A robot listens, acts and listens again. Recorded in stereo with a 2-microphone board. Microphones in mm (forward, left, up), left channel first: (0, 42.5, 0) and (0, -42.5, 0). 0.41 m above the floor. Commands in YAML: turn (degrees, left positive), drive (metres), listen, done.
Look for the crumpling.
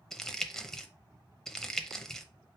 turn: 30
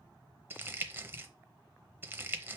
turn: -30
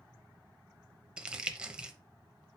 turn: -15
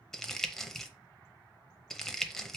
done: "Found it: crumpling, straight ahead, under 1 m away."